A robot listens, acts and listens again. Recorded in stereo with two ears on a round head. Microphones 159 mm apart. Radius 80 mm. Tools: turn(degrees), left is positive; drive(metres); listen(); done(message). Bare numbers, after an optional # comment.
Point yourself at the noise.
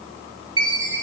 # The chime: about 30° right or 150° right.
turn(-30)
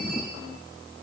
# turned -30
listen()
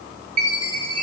# So it is at 115° right.
turn(-115)
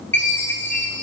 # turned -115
# The chime is now 15° left.
turn(15)
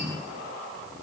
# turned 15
listen()
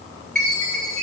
done("Found it: a chime, straight ahead, 2 to 4 m away.")